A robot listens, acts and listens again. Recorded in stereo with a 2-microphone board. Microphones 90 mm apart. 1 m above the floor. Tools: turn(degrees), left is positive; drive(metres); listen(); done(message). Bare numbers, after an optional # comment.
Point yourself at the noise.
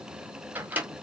# The microwave: about 15° right or 165° right.
turn(-15)
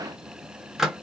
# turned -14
done("Found it: a microwave, straight ahead.")